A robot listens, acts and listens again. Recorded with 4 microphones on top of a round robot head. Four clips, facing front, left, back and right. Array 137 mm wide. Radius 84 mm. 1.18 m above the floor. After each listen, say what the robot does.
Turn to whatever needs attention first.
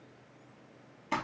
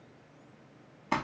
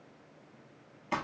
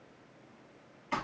Keep listening.
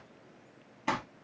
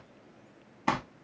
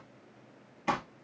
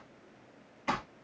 Keep listening.
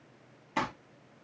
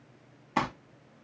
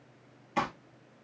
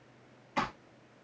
I can't make out anything urgent to turn to.